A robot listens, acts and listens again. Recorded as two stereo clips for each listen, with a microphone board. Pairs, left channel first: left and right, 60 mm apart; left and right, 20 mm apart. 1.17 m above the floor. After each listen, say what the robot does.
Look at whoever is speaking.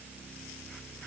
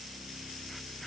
Keep listening.
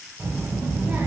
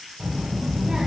Turn 20° right.
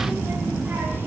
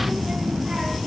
Turn 35° right.
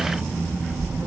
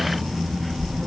Turn 110° right.
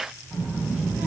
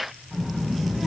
Turn 30° right.
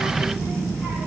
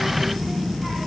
Turn 10° right.
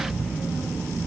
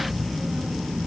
Found it: a child speaking, straight ahead.